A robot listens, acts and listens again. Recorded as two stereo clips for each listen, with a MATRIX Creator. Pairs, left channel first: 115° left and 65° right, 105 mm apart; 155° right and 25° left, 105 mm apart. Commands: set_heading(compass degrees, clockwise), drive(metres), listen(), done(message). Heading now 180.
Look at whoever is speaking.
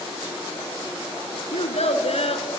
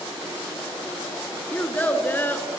set_heading(50)
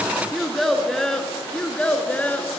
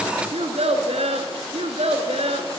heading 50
set_heading(15)
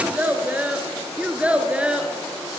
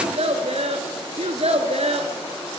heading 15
set_heading(5)
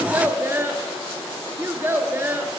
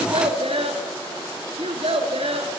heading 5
done("Found it: a child speaking, straight ahead.")